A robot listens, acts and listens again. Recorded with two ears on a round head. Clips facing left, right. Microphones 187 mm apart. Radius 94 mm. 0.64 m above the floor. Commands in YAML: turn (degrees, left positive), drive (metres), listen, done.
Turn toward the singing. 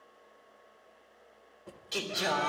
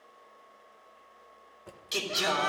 turn: -60
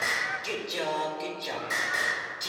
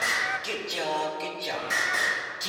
done: "Found it: singing, straight ahead."